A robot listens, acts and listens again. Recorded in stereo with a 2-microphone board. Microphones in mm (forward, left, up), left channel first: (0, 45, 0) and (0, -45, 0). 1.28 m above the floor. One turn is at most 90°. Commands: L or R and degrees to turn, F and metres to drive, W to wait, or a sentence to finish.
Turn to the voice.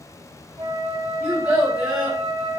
R30
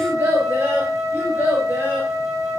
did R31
R20
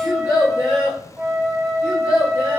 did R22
R90
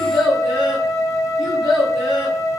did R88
R65
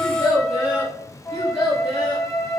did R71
Found it: a child speaking, straight ahead.